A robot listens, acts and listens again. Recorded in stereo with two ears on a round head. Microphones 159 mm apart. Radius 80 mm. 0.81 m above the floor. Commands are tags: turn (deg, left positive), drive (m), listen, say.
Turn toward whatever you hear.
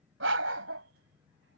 <turn deg="-75"/>
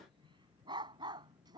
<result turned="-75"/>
<turn deg="-25"/>
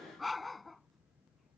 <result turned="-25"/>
<say>Facing the dog barking.</say>